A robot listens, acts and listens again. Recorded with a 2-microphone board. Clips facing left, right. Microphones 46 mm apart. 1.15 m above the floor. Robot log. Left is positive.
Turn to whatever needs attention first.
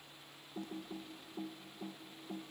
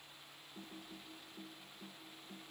cmd idle
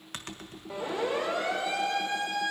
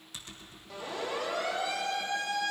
note: The siren: about 25° left or 155° left.
cmd yaw +25
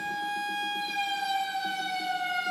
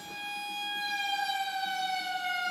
end: Found it: a siren, straight ahead.